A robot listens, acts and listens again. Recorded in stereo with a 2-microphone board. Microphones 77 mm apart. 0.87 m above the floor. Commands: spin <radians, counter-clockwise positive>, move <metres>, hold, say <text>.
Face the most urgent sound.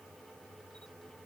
hold
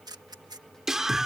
spin -0.52
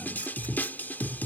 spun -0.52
spin 0.44
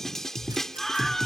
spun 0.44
say Found it: a scream, straight ahead.